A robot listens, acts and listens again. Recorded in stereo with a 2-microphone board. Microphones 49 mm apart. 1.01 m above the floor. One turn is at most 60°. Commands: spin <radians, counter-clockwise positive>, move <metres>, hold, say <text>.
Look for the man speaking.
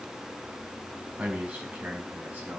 spin -0.44
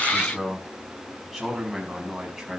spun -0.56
say Facing the man speaking.